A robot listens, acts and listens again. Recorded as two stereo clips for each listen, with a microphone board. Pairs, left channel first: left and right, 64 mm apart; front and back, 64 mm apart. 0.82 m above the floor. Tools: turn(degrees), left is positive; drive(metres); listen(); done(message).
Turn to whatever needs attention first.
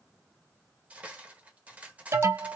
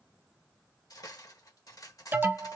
turn(degrees=-125)
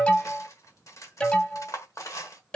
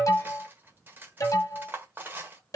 turn(degrees=20)
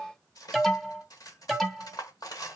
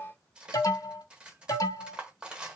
done("Found it: an alarm, straight ahead, 1 to 2 m away.")